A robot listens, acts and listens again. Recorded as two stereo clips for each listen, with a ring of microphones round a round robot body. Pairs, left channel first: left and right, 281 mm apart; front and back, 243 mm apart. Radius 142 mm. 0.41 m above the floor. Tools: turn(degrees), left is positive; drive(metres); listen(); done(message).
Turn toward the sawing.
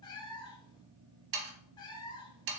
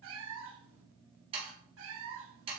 turn(degrees=-110)
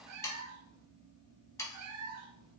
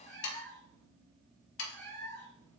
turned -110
turn(degrees=10)
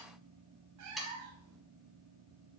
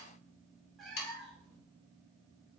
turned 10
done("Found it: sawing, straight ahead, 1 to 2 m away.")